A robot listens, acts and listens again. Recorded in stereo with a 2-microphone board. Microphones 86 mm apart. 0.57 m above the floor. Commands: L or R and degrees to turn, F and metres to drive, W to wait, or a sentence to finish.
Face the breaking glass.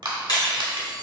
L60
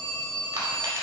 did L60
W
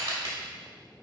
I heard breaking glass, but can't make it out now. It was about straight ahead or 60° left.